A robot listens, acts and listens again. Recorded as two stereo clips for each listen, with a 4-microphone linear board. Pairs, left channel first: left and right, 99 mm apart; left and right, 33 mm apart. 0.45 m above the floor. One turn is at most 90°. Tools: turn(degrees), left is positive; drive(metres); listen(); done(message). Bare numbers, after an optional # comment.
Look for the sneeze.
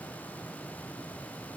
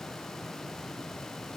listen()
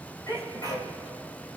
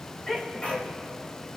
# The sneeze: about 40° left or 140° left.
turn(40)
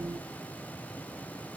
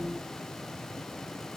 listen()
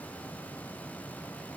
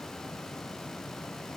done("I heard a sneeze, but can't make it out now. It was about straight ahead or 100° left.")